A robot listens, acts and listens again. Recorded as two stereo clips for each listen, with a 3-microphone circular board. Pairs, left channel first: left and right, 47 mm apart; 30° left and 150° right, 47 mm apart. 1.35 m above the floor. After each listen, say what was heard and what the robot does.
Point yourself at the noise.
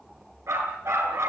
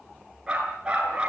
The dog barking: 85° right. Turn 85° right.
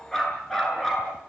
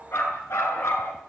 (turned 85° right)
The dog barking is now 10° left. Turn 10° left.
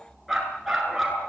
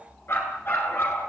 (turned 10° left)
Facing the dog barking.